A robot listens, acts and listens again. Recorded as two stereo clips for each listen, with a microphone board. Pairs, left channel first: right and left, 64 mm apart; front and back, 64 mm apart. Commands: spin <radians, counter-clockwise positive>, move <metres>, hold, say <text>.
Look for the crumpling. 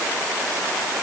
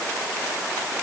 hold
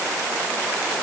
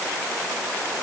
hold
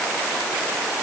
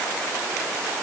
say I can't make out crumpling.